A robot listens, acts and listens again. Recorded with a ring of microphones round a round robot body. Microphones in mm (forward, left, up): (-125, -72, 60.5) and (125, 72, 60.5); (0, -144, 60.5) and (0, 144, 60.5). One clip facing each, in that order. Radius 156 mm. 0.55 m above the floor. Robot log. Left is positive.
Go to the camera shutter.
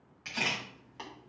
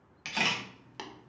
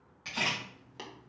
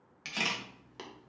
note: The camera shutter: 55° left.
cmd yaw +55
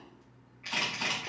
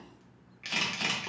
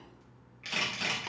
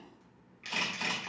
cmd fwd 1.0
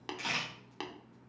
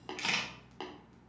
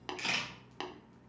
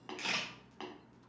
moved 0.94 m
cmd fwd 1.0
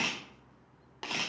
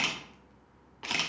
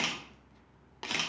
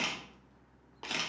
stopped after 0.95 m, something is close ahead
note: The camera shutter is now 10° right.
cmd yaw -10
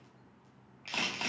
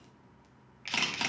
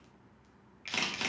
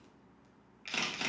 end: I am next to the camera shutter.